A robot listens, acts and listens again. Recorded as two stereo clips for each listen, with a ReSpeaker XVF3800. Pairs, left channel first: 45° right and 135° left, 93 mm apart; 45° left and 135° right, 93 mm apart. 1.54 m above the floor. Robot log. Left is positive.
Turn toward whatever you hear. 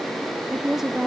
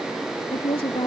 note: The woman speaking: 50° left.
cmd yaw +50
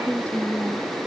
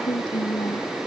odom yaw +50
note: The woman speaking is now 30° left.
cmd yaw +30
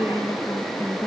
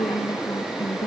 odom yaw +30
note: The woman speaking is now 10° left.
cmd yaw +10
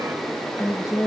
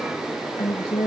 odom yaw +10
note: The woman speaking is now 15° left.
cmd yaw +15
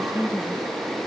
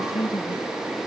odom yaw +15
end: Found it: a woman speaking, straight ahead.